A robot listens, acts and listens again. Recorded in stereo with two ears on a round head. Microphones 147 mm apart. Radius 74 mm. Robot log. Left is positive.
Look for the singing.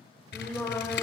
note: The singing: about 15° left or 165° left.
cmd yaw +15
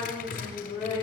note: The singing: about 35° left or 145° left.
cmd yaw +35
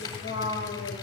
note: So it is at 105° left.
cmd yaw +105
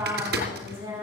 note: The singing is now 15° right.
cmd yaw -15
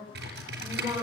note: The singing is now 10° right.
cmd yaw -10
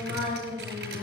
end: Found it: singing, straight ahead, over 4 m away.